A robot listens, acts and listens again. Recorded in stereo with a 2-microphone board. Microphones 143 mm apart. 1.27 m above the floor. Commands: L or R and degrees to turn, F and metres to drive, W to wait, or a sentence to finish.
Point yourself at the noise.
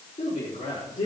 L65
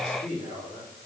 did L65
L45
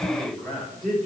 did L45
Facing the man speaking.